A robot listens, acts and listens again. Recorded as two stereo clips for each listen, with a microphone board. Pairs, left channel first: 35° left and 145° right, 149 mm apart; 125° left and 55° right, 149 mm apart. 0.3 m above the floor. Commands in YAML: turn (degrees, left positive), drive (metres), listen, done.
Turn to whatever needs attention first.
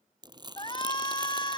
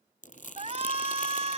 turn: -20
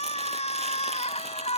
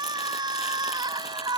done: "Found it: a shout, straight ahead."